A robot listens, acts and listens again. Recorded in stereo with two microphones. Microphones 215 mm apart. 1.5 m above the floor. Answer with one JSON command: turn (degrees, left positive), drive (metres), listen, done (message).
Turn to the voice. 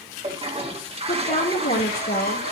{"turn": 45}
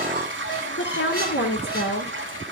{"turn": 90}
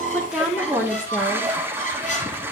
{"done": "Facing the woman speaking."}